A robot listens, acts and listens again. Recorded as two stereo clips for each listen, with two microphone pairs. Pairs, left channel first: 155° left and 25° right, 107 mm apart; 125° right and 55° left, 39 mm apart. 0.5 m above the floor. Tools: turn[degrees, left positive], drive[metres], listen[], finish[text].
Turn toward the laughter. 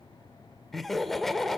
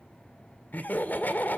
Thought: The laughter: 115° right.
Action: turn[-115]
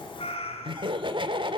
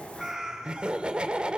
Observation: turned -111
Action: finish[Found it: laughter, straight ahead, 1 to 2 m away.]